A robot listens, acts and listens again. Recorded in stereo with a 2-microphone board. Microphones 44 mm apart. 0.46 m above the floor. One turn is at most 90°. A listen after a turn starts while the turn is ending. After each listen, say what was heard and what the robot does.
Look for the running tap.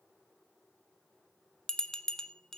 Keep listening.
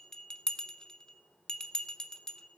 Keep listening.
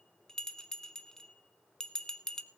I can't make out a running tap to turn to.